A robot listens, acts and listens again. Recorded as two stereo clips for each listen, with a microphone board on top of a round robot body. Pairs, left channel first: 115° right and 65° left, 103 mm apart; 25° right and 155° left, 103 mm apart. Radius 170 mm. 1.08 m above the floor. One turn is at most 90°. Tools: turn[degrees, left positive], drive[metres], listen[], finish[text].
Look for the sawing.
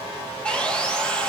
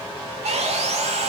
Thought: The sawing: 165° left.
Action: turn[90]
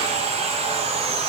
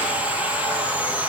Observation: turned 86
Thought: The sawing is now 80° left.
Action: turn[80]
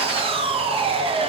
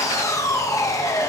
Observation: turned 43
Thought: The sawing is now 40° left.
Action: turn[40]
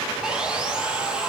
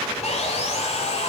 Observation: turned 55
Thought: The sawing is now 15° right.
Action: turn[-15]
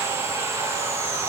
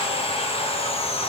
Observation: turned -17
Action: finish[Facing the sawing, 1 to 2 m away.]